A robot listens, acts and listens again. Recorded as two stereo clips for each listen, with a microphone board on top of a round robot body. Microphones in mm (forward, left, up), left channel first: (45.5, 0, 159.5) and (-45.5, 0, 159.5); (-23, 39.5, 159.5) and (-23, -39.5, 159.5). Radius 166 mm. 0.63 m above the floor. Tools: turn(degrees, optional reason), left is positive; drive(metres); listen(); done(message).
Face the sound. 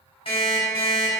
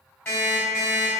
turn(degrees=25, reason="The alarm clock: 25° left.")
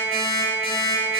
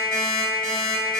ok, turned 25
done("Facing the alarm clock, 1 to 2 m away.")